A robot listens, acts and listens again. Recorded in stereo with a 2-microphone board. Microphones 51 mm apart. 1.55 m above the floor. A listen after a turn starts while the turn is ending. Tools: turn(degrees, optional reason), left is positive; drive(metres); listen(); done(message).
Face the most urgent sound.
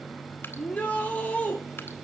turn(degrees=30, reason="The shout: about 30° left or 150° left.")
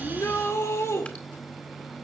turn(degrees=120, reason="So it is at 120° left.")
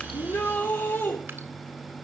turn(degrees=40, reason="The shout is now 40° left.")
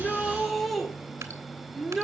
done("Found it: a shout, straight ahead.")